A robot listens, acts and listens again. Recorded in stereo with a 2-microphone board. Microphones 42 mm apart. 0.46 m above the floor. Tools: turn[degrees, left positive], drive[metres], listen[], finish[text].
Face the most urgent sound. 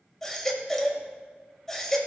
Thought: The baby crying: about 15° left or 165° left.
Action: turn[15]
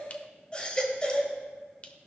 Thought: So it is at 150° left.
Action: turn[150]
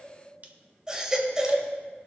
Thought: The baby crying is now 25° right.
Action: turn[-25]
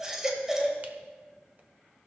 Thought: The baby crying is now 20° right.
Action: turn[-20]
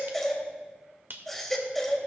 Action: finish[Found it: a baby crying, straight ahead, 1 to 2 m away.]